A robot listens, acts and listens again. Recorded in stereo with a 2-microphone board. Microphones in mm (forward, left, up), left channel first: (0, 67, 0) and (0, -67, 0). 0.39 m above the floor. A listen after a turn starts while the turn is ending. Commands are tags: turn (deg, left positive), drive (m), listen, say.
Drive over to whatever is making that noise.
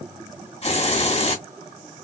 <turn deg="50"/>
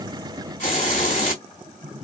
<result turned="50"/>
<turn deg="75"/>
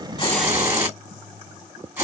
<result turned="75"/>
<turn deg="-15"/>
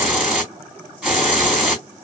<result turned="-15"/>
<drive m="1.0"/>
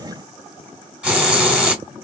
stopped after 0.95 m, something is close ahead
<turn deg="-10"/>
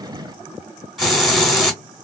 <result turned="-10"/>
<say>I am next to the hiss.</say>